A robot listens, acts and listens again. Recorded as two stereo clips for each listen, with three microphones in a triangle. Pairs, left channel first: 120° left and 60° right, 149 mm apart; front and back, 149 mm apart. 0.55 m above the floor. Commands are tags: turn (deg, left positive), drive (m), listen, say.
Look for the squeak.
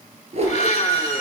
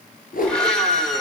<turn deg="-60"/>
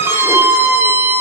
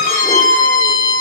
<turn deg="15"/>
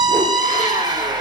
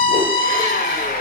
<say>Facing the squeak, 1 to 2 m away.</say>